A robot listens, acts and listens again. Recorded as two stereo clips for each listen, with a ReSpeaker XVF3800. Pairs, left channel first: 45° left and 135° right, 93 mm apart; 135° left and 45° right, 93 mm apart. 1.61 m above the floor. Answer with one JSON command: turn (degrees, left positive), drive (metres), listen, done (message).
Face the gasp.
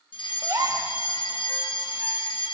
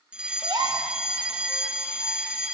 {"turn": -85}
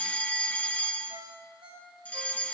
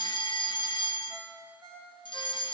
{"done": "Facing where the gasp came from. I can't hear it now."}